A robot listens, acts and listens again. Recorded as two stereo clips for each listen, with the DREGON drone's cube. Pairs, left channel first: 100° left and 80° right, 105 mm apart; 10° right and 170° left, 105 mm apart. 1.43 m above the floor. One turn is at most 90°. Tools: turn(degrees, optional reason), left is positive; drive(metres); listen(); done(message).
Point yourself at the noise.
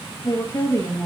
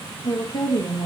turn(degrees=35, reason="The woman speaking: 35° left.")
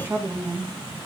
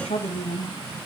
turn(degrees=-20, reason="The woman speaking is now 20° right.")
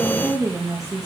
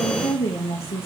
turn(degrees=-20, reason="The woman speaking is now 20° right.")
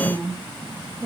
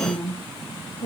turn(degrees=-10, reason="The woman speaking is now 10° right.")
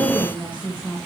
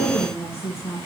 done("Found it: a woman speaking, straight ahead.")